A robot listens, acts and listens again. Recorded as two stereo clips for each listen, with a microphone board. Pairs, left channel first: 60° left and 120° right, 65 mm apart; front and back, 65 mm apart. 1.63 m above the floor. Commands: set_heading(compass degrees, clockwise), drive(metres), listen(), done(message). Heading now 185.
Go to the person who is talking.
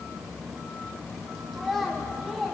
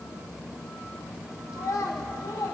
set_heading(215)
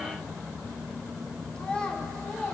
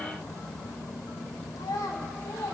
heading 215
set_heading(230)
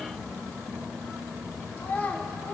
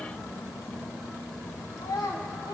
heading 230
drive(1.0)
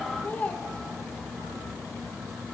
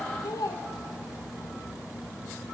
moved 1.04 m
drive(1.0)
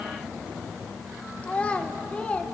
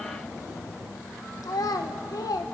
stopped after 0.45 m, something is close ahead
set_heading(240)
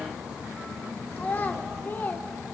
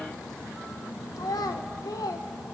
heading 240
done("Arrived at the child speaking, straight ahead.")